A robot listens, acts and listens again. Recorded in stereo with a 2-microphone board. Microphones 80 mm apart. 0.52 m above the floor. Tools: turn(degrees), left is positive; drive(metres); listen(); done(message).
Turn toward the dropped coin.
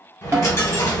turn(degrees=40)
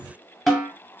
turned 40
listen()
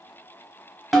done("I heard a dropped coin, but can't make it out now. It was about straight ahead or 100° left.")